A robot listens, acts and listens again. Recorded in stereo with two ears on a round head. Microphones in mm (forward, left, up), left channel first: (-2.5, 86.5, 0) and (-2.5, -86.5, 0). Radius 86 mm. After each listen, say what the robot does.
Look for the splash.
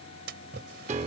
Turn 60° right.
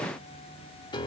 Keep listening.
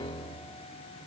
I heard a splash, but can't make it out now. It was about straight ahead or 60° right.